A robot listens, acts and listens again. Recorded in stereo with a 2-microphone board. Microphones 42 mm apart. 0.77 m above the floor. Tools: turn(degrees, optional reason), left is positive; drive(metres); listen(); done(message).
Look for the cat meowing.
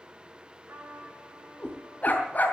turn(degrees=35, reason="The cat meowing: about 35° left or 145° left.")
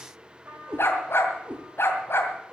turn(degrees=-30, reason="So it is at 30° right.")
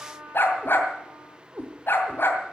turn(degrees=-30, reason="The cat meowing is now 30° right.")
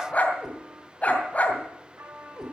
done("Facing the cat meowing, over 4 m away.")